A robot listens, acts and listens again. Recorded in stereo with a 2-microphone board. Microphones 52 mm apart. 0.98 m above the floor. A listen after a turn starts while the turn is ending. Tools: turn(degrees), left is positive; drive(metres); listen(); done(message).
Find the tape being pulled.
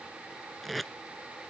turn(degrees=30)
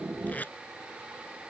turn(degrees=150)
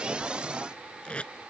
turn(degrees=20)
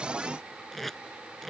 done("Facing the tape being pulled.")